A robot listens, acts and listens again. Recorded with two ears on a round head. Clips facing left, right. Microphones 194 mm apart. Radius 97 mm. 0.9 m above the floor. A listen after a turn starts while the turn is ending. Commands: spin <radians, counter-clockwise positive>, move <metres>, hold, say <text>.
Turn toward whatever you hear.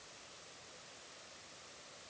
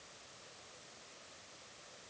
hold
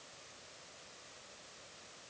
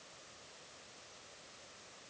hold
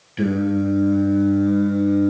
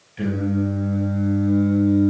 spin 1.22
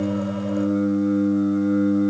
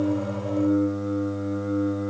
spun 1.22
spin 0.70
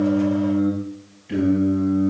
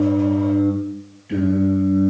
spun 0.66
say Facing the singing.